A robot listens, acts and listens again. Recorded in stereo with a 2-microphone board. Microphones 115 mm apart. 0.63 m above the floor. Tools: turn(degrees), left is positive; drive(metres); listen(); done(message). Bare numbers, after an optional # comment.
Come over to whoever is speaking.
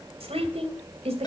# The woman speaking: about 65° right or 115° right.
turn(-65)
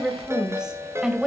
# So it is at 10° right.
turn(-10)
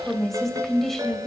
drive(1.0)
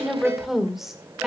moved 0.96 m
drive(1.0)
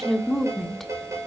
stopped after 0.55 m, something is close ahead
done("I am next to the woman speaking.")